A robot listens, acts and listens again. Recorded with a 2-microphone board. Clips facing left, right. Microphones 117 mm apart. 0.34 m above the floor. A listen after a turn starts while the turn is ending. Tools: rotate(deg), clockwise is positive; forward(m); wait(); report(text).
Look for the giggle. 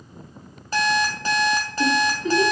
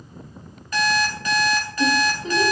rotate(25)
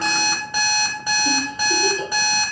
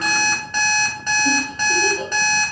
rotate(125)
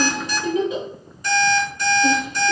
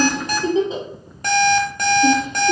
rotate(30)
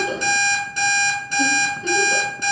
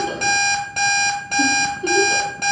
rotate(15)
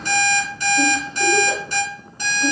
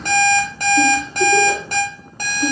wait()
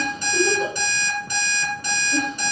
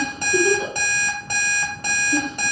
report("Facing the giggle, 1 to 2 m away.")